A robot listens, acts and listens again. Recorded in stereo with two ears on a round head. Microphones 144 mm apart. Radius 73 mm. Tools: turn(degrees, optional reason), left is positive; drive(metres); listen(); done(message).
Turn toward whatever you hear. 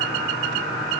listen()
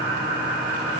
listen()
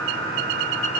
done("I can't make out anything.")